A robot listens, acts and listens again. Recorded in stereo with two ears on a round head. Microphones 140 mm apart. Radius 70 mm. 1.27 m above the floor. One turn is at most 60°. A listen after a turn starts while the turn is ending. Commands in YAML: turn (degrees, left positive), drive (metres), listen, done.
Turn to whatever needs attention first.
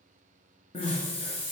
turn: 35
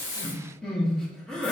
done: "Facing the crying, 1 to 2 m away."